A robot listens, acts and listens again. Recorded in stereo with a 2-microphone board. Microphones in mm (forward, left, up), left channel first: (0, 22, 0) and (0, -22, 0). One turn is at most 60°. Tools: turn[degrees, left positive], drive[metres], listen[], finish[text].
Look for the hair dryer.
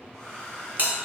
Thought: The hair dryer: about 15° left or 165° left.
Action: turn[15]
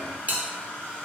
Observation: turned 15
Thought: So it is at 150° left.
Action: turn[60]
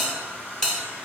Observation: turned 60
Thought: The hair dryer is now 80° left.
Action: turn[60]
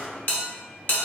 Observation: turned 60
Thought: Nothing new. It was at 20° left.
Action: turn[20]
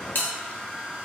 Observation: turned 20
Thought: The hair dryer is now 30° left.
Action: turn[30]
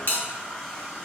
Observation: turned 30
Thought: The hair dryer is now 20° left.
Action: turn[20]
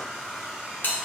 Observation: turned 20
Action: finish[Facing the hair dryer.]